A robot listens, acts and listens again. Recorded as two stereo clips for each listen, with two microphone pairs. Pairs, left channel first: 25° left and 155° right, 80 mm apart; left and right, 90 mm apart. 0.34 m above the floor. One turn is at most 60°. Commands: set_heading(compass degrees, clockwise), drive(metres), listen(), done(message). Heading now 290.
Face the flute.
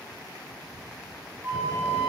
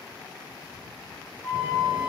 set_heading(230)
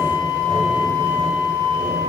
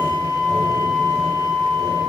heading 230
set_heading(170)
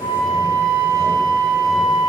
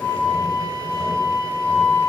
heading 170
set_heading(150)
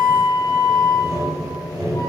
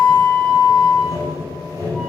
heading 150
done("Facing the flute.")